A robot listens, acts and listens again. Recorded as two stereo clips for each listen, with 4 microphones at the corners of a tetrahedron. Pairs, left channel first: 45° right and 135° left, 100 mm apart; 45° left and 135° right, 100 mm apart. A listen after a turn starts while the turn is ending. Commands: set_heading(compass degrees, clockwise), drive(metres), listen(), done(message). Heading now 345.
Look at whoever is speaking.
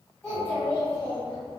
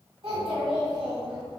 set_heading(100)
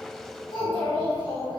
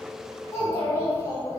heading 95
set_heading(105)
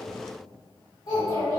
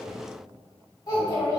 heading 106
done("Found it: a child speaking, straight ahead, 1 to 2 m away.")